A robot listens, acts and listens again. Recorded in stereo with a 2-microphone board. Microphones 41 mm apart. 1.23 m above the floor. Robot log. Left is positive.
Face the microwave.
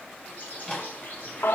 note: The microwave: about 20° left or 160° left.
cmd yaw +20
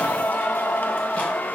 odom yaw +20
cmd idle
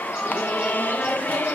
cmd idle
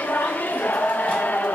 end: I heard a microwave, but can't make it out now. It was about straight ahead or 140° left.